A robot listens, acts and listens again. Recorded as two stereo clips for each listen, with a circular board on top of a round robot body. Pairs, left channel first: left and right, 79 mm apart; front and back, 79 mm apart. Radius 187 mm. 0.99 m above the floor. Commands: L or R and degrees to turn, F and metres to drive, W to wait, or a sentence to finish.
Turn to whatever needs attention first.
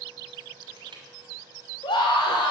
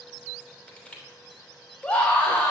L75
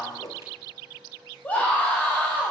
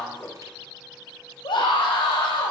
L20
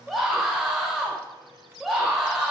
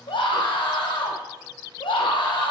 Found it: a scream, straight ahead, 2 to 4 m away.